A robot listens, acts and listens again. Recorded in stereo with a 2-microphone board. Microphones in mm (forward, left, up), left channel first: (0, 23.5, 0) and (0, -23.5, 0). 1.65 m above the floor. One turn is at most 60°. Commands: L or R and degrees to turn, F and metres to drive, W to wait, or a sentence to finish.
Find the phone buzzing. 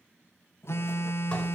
L60
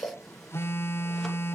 L60
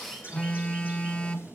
L25
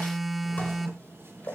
Facing the phone buzzing.